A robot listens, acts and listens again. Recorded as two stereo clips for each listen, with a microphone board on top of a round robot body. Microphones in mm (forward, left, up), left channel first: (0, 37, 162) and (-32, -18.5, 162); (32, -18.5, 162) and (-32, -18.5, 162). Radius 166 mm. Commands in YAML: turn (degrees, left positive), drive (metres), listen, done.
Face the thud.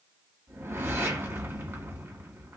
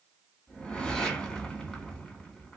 listen: true
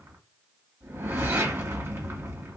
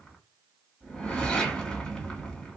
listen: true
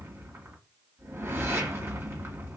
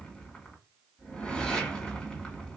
done: "I can't make out a thud to turn to."